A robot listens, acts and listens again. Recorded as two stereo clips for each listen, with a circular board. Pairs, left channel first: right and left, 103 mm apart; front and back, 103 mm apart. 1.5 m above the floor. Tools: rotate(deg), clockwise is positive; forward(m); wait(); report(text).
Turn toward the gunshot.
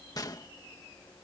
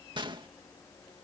rotate(140)
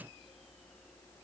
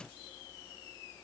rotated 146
report("Facing where the gunshot came from. I can't hear it now.")